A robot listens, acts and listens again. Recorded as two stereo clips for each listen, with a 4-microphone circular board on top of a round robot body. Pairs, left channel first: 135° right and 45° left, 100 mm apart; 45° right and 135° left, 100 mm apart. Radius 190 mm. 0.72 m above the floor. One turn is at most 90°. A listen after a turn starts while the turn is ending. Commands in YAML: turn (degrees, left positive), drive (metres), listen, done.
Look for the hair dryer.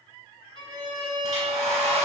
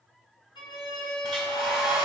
turn: 50
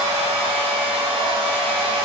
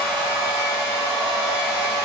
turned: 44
done: "Facing the hair dryer."